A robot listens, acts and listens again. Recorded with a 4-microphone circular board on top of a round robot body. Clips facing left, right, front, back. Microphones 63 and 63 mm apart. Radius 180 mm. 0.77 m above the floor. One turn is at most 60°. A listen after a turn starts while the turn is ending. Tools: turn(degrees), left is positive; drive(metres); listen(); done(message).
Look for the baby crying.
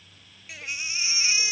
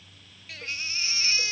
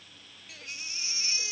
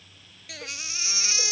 turn(degrees=60)
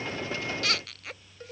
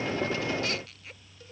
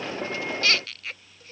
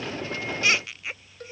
turn(degrees=60)
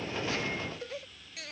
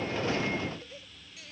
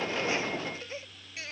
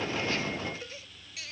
turn(degrees=50)
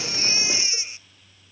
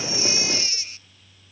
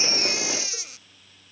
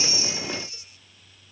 turn(degrees=20)
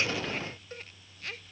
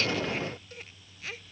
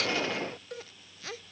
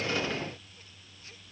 done("Facing the baby crying.")